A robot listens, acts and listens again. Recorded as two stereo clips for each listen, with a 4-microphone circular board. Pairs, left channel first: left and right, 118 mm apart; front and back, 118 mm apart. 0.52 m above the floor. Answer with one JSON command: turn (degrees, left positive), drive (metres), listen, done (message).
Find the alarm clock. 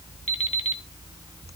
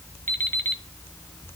{"turn": 70}
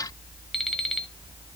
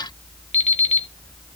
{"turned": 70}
{"done": "Found it: an alarm clock, straight ahead."}